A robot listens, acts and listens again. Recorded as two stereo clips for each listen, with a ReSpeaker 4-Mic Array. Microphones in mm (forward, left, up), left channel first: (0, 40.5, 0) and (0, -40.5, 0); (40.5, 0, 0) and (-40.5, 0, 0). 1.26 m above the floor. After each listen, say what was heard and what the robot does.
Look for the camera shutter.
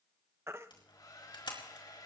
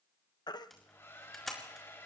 The camera shutter: 85° left. Turn 85° left.
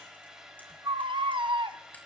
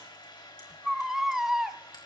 Keep listening.
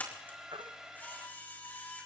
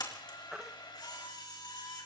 The camera shutter is now 20° left. Turn 20° left.
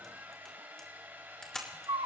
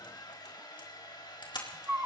Facing the camera shutter.